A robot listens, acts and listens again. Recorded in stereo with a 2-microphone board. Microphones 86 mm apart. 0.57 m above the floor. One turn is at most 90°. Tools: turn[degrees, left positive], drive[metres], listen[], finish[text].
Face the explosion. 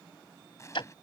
Thought: The explosion: about 35° left or 145° left.
Action: turn[35]
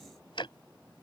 Action: listen[]
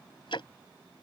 Action: finish[I heard an explosion, but can't make it out now. It was about straight ahead or 110° left.]